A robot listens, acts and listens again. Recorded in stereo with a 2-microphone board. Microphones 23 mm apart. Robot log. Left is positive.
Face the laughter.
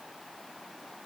cmd idle
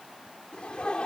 note: The laughter: about 50° left or 130° left.
cmd yaw +50
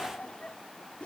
note: So it is at 80° left.
cmd yaw +80
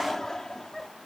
note: The laughter is now 25° left.
cmd yaw +25
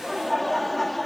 note: The laughter is now 10° left.
cmd yaw +10
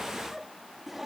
end: Facing the laughter.